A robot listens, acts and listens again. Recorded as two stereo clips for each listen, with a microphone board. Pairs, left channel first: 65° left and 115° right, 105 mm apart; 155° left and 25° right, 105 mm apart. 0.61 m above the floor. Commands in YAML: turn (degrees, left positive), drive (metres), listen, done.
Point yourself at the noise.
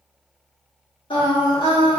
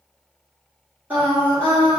turn: 45
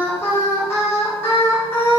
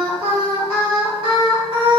done: "Found it: singing, straight ahead."